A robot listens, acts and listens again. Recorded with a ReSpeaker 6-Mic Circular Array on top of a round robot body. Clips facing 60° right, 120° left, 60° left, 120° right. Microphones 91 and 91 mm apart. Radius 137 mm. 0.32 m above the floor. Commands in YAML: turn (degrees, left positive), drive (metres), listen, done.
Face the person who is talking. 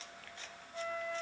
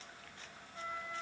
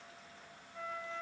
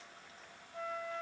listen: true
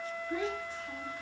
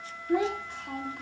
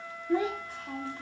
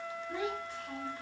turn: 100
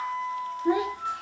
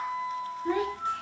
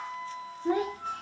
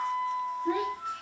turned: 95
turn: 10
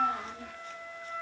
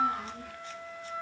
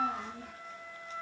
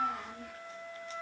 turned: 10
done: "Facing the child speaking, 1 to 2 m away."